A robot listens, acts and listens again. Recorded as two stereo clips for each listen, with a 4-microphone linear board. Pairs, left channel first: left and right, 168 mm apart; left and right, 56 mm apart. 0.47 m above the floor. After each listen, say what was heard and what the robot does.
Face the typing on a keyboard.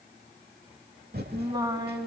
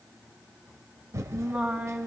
The typing on a keyboard: about 70° right or 110° right. Turn 70° right.
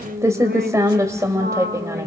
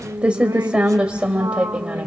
So it is at 20° right. Turn 20° right.
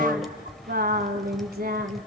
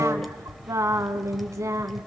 Facing the typing on a keyboard.